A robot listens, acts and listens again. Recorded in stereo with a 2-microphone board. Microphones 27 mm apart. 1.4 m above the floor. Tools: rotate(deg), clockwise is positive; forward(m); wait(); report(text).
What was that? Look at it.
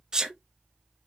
rotate(25)
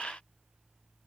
wait()
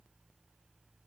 report("I heard a sneeze, but can't make it out now. It was about straight ahead or 130° right.")